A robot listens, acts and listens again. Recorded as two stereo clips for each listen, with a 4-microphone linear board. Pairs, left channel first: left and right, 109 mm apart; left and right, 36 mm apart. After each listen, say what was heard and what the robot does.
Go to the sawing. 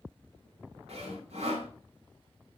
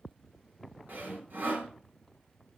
The sawing: about 75° right or 105° right. Turn 75° right.
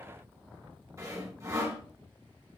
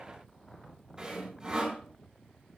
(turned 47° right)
So it is at 30° right. Turn 30° right.
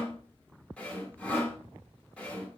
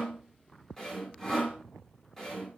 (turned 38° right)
The sawing is now 10° left. Turn 10° left.
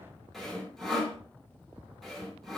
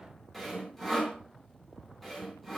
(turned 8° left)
Drive 1.0 m forward.
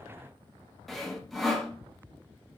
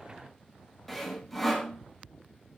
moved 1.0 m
Drive 1.0 m forward.
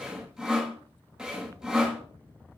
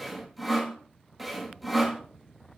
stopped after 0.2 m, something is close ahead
I am next to the sawing.